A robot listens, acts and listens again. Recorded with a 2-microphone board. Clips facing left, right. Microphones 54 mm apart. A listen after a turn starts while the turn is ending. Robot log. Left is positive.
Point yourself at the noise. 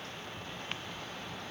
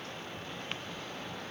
cmd idle
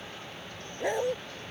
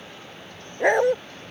note: The dog barking: about 65° right or 115° right.
cmd yaw -65
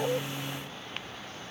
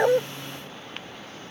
cmd idle
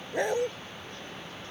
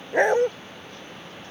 note: So it is at 50° right.
cmd yaw -50
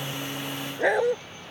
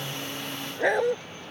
end: Facing the dog barking.